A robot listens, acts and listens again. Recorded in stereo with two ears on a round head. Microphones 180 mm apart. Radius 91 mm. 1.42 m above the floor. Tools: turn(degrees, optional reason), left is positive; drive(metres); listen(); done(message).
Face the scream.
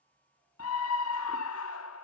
turn(degrees=90)
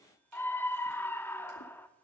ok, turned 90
turn(degrees=10, reason="So it is at 10° left.")
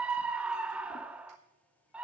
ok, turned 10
done("Facing the scream, under 1 m away.")